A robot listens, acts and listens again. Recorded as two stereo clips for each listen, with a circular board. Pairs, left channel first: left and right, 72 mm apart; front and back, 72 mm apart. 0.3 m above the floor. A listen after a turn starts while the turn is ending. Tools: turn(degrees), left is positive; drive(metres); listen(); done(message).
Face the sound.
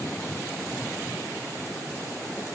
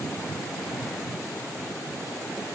listen()
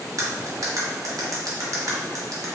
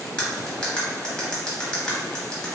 turn(degrees=-75)
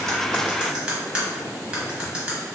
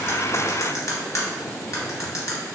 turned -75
turn(degrees=-20)
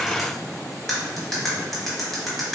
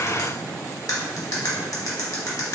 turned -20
done("Found it: cutlery clinking, straight ahead.")